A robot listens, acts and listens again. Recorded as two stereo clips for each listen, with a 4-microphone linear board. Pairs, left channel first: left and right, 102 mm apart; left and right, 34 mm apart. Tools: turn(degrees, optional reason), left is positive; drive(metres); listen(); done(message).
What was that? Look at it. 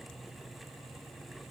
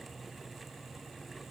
listen()
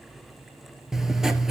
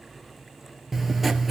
turn(degrees=-30)
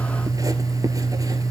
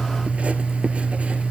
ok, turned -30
turn(degrees=-145, reason="So it is at 145° right.")
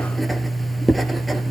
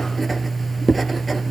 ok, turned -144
done("Facing the writing, 1 to 2 m away.")